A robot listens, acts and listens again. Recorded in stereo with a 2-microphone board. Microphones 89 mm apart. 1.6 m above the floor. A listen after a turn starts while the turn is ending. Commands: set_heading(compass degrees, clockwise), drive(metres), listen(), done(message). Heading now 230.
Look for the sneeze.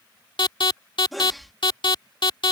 set_heading(200)
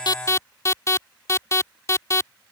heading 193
listen()
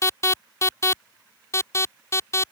done("I heard a sneeze, but can't make it out now. It was about 40° right or 145° left.")